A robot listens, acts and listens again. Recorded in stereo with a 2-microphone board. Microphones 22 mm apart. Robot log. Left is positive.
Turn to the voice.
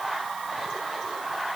cmd idle
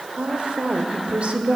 note: The woman speaking: about 55° right or 125° right.
cmd yaw -55
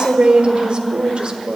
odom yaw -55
note: So it is at 50° right.
cmd yaw -50
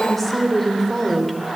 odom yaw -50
end: Facing the woman speaking.